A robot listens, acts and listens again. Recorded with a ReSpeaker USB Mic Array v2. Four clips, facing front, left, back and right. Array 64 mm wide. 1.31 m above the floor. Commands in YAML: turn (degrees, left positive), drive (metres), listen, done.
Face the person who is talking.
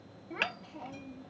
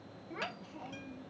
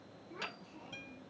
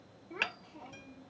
turn: 20
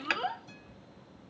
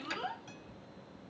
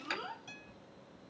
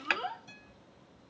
done: "Facing the child speaking."